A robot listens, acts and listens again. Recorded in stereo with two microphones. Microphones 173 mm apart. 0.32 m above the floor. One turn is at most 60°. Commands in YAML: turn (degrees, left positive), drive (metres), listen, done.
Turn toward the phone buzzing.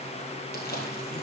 listen: true
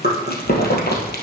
listen: true
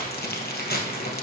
done: "I can't make out a phone buzzing, only chewing."